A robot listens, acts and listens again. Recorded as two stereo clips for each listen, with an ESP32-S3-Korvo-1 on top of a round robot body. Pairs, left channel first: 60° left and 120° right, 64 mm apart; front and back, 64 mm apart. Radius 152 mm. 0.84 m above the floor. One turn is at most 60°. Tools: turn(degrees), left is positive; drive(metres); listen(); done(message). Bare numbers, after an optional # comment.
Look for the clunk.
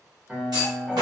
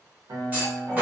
# The clunk: 115° right.
turn(-60)
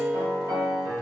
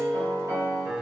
# Nothing new. It was at 55° right.
turn(-55)
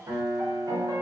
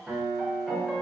done("I heard a clunk from this way, but can't make it out now.")